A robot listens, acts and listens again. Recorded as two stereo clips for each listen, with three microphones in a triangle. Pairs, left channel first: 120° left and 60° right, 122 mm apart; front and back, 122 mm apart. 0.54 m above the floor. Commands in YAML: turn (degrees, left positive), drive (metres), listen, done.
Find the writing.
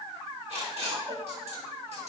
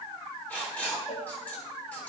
turn: -75
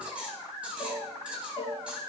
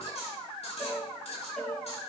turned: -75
listen: true
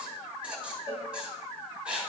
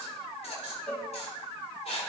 turn: 20
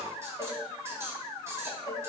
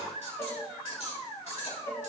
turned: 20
done: "Facing the writing, over 4 m away."